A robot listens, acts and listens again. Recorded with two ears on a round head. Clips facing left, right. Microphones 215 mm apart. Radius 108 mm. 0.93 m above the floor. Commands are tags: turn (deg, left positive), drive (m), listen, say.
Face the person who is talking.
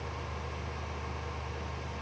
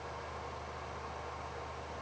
<listen/>
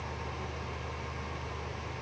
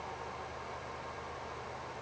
<listen/>
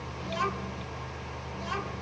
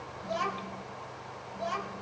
<turn deg="65"/>
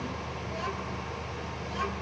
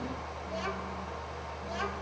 <say>Facing the child speaking.</say>